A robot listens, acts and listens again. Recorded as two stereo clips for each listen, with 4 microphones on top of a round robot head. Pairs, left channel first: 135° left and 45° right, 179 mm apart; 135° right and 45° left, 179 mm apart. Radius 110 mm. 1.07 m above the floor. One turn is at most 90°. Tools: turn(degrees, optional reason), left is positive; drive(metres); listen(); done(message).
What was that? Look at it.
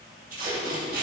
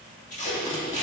turn(degrees=-85, reason="The tape being pulled: 85° right.")
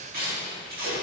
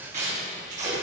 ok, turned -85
done("Facing the tape being pulled, 2 to 4 m away.")